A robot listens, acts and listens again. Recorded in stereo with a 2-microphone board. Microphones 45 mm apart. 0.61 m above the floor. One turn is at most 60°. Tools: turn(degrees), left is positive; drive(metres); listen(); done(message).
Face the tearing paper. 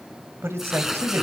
turn(degrees=-30)
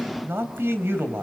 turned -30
listen()
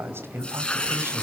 turn(degrees=25)
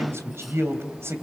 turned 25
listen()
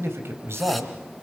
listen()
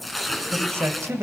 done("Found it: tearing paper, straight ahead.")